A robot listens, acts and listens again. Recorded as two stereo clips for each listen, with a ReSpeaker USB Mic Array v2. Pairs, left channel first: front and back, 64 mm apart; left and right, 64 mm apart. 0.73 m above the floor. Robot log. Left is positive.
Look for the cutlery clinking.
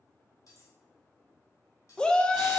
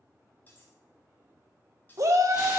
note: The cutlery clinking: 30° left.
cmd yaw +30
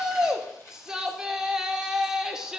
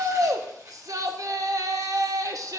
cmd idle
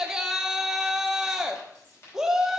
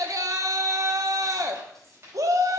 cmd idle
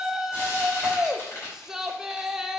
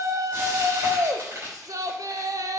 end: Facing where the cutlery clinking came from. I can't hear it now.